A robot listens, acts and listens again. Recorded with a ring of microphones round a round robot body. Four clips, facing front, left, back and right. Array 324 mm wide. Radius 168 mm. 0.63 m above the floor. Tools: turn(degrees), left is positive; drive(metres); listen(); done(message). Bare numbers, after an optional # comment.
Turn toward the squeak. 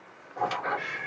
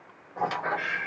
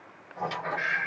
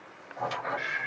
# The squeak: 60° left.
turn(60)
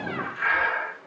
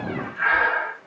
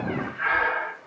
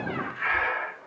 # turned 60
done("Found it: a squeak, straight ahead, 2 to 4 m away.")